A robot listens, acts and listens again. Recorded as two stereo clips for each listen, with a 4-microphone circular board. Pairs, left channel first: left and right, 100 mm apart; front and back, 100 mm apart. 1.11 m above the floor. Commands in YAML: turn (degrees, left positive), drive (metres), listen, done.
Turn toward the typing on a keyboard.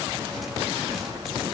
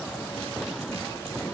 listen: true
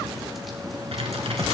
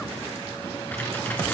turn: -70
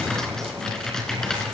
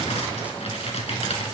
done: "Found it: typing on a keyboard, straight ahead, 2 to 4 m away."